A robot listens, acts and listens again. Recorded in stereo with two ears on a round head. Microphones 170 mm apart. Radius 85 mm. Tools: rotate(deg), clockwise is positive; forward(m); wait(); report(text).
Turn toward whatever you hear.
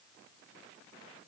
wait()
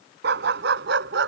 rotate(65)
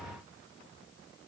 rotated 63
wait()
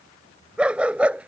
report("Facing the dog barking.")